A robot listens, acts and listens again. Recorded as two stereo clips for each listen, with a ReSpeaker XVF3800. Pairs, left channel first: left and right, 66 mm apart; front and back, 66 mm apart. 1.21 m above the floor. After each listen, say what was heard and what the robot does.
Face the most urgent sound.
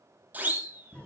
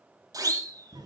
The siren: 150° right. Turn 150° right.
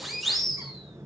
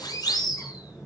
Found it: a siren, straight ahead, 2 to 4 m away.